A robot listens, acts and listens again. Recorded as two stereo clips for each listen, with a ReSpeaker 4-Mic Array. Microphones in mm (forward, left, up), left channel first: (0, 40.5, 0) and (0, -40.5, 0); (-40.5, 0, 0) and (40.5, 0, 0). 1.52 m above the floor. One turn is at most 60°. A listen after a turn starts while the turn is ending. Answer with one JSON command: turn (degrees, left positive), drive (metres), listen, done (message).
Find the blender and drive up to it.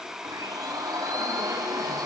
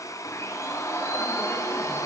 {"turn": -60}
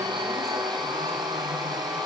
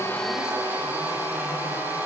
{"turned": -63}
{"turn": -60}
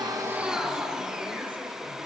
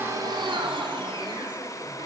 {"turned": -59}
{"drive": 1.0}
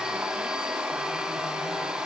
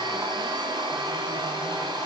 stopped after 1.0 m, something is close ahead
{"turn": -10}
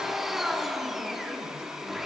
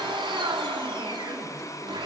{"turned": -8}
{"done": "Something is in my way. I am facing the blender but have not reached it."}